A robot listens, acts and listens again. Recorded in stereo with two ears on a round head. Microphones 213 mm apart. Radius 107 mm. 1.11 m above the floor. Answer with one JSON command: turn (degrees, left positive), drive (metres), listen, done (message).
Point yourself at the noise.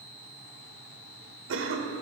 {"turn": -55}
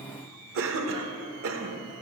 {"turn": -65}
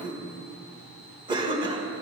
{"turn": -20}
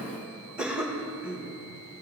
{"done": "Facing the cough."}